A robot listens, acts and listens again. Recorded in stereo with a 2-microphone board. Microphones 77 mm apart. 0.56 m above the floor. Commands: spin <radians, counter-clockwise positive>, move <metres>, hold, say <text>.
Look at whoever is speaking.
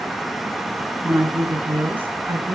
spin -0.44
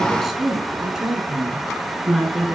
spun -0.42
spin -0.52
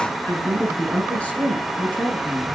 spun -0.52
spin 0.26
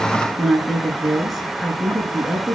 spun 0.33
say Facing the woman speaking, over 4 m away.